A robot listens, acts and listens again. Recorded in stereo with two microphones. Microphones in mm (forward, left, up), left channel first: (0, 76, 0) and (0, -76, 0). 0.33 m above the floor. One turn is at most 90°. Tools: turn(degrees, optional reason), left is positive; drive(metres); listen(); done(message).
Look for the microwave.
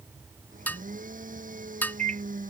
turn(degrees=-55, reason="The microwave: about 55° right or 125° right.")
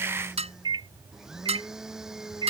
turn(degrees=-35, reason="So it is at 35° right.")
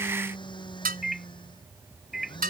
done("Facing the microwave.")